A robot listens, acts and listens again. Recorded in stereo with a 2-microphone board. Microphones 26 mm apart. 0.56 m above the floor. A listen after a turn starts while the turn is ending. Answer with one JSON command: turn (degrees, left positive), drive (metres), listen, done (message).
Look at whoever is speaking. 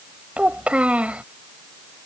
{"turn": -60}
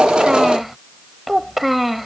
{"done": "Found it: a child speaking, straight ahead."}